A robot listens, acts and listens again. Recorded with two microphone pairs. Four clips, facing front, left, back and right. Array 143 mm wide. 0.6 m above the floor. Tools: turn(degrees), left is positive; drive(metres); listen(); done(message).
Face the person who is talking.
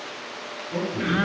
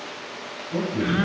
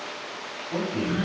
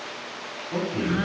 turn(degrees=-145)
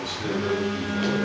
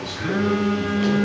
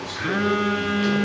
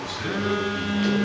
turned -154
turn(degrees=10)
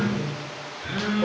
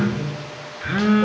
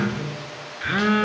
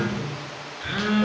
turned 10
done("Found it: a man speaking, straight ahead, 2 to 4 m away.")